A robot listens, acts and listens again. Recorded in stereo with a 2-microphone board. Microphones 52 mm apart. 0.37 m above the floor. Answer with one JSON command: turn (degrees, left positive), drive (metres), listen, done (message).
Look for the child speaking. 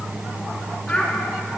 {"turn": 25}
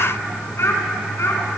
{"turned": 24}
{"turn": 120}
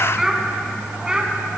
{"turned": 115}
{"turn": -15}
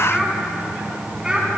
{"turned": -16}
{"turn": -15}
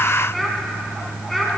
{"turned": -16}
{"done": "Facing the child speaking, 2 to 4 m away."}